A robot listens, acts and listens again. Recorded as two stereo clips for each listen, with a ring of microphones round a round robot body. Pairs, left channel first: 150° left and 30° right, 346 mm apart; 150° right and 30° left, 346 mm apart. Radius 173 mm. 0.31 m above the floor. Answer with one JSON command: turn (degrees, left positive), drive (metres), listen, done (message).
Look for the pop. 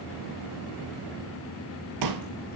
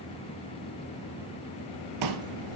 {"done": "Facing the pop."}